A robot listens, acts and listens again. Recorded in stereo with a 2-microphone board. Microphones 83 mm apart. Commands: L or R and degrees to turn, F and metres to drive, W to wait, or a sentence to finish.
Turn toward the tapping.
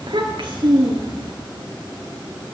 W
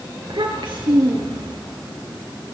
W
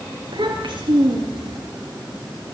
I can't make out tapping, only a child speaking.